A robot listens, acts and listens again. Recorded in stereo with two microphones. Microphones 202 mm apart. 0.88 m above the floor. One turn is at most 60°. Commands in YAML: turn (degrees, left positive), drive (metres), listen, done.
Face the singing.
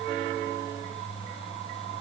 listen: true
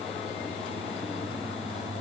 listen: true
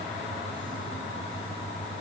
done: "I can't make out singing."